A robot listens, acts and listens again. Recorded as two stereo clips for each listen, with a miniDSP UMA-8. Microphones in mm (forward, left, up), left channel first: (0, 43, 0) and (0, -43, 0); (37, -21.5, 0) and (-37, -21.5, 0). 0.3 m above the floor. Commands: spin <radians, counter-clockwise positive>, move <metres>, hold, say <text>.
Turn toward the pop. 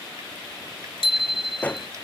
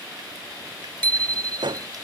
spin 2.88
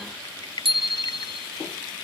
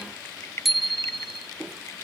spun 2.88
say Facing where the pop came from. I can't hear it now.